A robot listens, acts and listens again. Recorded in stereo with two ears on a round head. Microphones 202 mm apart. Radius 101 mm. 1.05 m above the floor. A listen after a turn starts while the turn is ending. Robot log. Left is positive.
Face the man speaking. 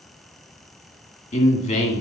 note: The man speaking: about 30° left or 150° left.
cmd yaw +30
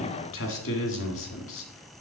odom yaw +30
note: So it is at 120° left.
cmd yaw +120
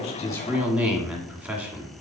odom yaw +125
note: The man speaking is now 10° right.
cmd yaw -10
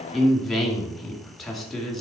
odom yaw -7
end: Found it: a man speaking, straight ahead.